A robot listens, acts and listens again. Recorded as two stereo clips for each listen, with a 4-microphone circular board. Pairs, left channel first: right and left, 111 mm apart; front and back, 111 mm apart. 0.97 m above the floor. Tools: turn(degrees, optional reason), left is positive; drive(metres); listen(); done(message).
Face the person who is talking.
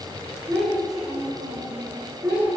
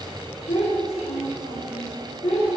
turn(degrees=15, reason="The child speaking: 15° left.")
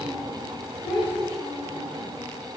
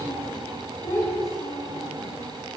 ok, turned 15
done("Facing the child speaking, over 4 m away.")